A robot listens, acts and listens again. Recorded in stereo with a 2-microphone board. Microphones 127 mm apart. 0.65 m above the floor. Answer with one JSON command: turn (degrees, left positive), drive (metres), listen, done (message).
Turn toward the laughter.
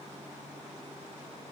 {"listen": true}
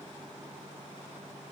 {"listen": true}
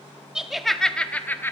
{"turn": 20}
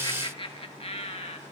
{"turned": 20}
{"turn": 125}
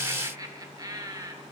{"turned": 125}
{"turn": -30}
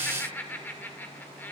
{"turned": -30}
{"turn": 15}
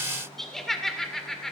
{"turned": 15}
{"done": "Found it: laughter, straight ahead."}